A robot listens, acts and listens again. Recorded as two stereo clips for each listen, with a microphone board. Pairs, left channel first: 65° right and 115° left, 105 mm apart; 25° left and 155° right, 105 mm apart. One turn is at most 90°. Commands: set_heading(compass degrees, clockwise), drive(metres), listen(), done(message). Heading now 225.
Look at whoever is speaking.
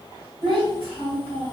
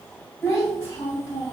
set_heading(145)
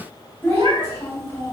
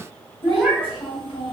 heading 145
done("Facing the child speaking.")